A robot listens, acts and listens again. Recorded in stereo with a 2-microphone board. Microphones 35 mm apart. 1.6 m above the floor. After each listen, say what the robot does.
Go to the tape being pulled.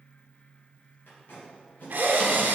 Turn 90° left.
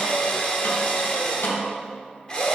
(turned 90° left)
Keep listening.
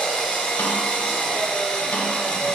Keep listening.
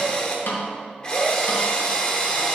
Facing where the tape being pulled came from. I can't hear it now. I did not reach it.